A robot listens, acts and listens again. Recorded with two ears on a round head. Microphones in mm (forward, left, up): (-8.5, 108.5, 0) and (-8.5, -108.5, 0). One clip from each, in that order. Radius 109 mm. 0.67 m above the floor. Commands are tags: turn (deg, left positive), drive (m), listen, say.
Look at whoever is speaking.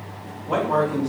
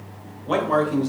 <turn deg="-65"/>
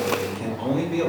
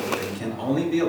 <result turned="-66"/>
<turn deg="-15"/>
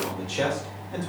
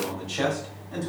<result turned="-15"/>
<say>Facing the man speaking, 1 to 2 m away.</say>